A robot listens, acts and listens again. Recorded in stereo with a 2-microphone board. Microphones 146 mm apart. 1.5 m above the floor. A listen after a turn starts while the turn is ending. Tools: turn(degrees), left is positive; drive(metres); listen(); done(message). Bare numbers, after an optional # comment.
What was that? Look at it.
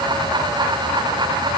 listen()
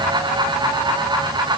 listen()
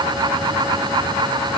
done("I can't make out anything to turn to.")